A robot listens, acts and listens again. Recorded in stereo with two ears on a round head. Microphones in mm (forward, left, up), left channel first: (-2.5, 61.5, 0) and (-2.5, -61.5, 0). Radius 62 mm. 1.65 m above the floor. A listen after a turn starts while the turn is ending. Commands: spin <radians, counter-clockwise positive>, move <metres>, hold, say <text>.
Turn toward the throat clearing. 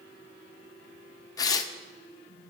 hold
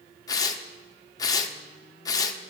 hold
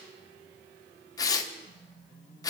say I can't make out throat clearing to turn to.